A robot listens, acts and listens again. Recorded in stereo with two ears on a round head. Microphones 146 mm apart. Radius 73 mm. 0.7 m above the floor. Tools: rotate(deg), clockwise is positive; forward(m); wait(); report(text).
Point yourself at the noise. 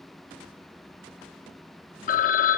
rotate(-50)
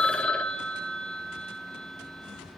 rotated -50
report("Facing the phone ringing.")